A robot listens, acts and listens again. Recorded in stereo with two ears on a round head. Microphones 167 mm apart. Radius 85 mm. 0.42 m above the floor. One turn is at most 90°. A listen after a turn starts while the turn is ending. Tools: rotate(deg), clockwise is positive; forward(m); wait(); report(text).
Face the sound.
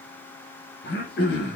rotate(-55)
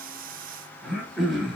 report("Found it: throat clearing, straight ahead.")